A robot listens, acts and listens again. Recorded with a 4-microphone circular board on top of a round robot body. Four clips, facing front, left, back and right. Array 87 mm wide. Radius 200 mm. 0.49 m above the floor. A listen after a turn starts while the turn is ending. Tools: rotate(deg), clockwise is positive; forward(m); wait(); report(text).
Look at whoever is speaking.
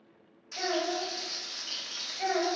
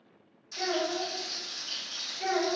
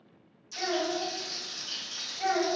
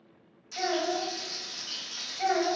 rotate(70)
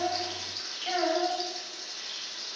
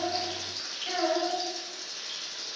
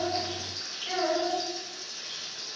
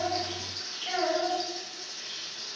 report("Found it: a child speaking, straight ahead, 1 to 2 m away.")